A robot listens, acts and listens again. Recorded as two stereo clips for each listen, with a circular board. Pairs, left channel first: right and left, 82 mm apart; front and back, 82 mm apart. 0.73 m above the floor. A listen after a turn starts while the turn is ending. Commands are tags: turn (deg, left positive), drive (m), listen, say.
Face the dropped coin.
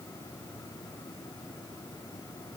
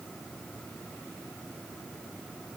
<listen/>
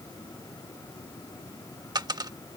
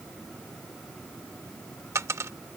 <turn deg="125"/>
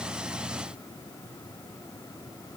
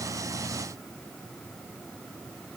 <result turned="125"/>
<say>I heard a dropped coin from this way, but can't make it out now.</say>